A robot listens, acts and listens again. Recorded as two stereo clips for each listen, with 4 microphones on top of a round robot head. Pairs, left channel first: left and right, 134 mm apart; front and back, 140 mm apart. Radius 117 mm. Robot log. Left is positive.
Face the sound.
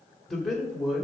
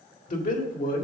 end: Found it: a man speaking, straight ahead.